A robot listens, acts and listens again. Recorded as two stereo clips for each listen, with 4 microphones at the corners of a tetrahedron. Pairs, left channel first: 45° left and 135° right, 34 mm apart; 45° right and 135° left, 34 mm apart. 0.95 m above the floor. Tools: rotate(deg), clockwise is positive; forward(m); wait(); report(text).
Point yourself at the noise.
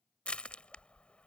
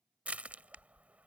rotate(-95)
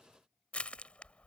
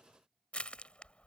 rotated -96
report("Found it: crushing, straight ahead.")